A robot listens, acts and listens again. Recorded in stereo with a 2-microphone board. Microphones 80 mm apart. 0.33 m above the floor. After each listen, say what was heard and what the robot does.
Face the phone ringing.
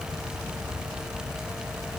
Keep listening.
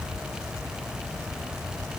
Keep listening.
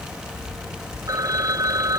The phone ringing: about 50° right or 130° right. Turn 50° right.
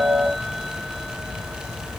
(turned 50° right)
Keep listening.
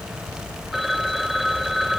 Facing the phone ringing.